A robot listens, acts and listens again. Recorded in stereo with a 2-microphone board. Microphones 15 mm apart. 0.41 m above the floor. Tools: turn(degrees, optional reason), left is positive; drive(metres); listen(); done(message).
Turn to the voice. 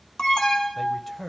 turn(degrees=25, reason="The man speaking: about 25° left or 155° left.")
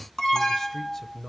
turn(degrees=130, reason="So it is at 130° left.")
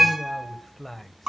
turn(degrees=10, reason="The man speaking is now 10° left.")
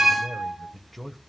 done("Found it: a man speaking, straight ahead, 1 to 2 m away.")